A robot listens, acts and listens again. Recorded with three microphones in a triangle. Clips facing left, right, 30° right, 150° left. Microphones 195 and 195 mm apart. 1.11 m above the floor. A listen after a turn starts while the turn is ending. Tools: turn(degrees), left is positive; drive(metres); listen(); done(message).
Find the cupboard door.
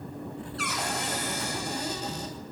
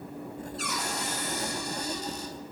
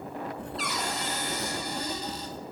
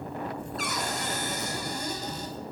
turn(degrees=110)
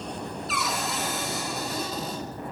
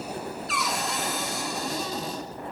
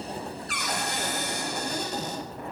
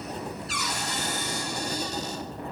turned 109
done("Found it: a cupboard door, straight ahead.")